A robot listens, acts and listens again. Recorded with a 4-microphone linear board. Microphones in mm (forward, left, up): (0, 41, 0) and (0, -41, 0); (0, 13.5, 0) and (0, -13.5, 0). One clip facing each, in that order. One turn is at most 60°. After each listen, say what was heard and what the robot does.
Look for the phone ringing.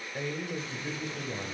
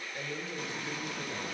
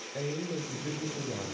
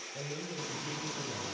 Keep listening.
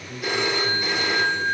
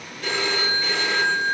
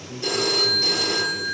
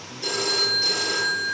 Turn 30° left.
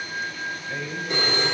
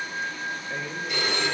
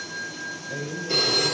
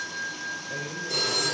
So it is at 140° left. Turn 60° left.
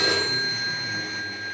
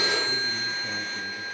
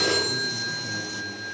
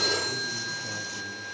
The phone ringing is now 100° left. Turn 60° left.
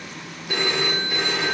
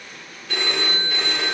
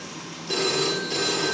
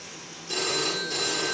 The phone ringing is now 15° left. Turn 15° left.
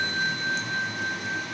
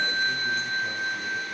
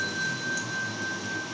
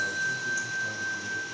Facing the phone ringing.